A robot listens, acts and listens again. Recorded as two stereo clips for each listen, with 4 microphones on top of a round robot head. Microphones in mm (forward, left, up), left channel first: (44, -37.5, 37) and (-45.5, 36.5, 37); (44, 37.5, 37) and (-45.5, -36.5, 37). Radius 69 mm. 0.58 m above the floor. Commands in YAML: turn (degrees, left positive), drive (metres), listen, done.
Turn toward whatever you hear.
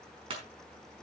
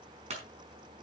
turn: -175
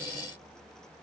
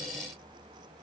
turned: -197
turn: 25
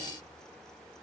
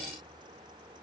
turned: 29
done: "Facing where the clunk came from. I can't hear it now."